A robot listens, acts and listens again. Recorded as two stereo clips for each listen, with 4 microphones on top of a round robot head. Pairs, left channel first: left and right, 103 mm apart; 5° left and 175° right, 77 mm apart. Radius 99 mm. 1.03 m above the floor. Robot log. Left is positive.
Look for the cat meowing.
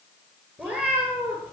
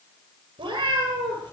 note: The cat meowing: 165° right.
cmd yaw -165
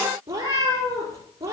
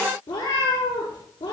note: The cat meowing is now 30° right.
cmd yaw -30
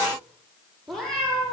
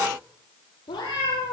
end: Facing the cat meowing.